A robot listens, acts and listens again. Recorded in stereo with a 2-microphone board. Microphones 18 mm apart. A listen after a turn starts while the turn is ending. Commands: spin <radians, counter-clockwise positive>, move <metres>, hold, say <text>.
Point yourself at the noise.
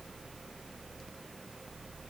hold
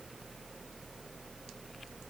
hold
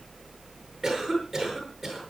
spin -0.52
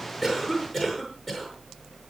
spin 0.26
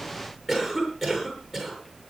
say Found it: a cough, straight ahead, over 4 m away.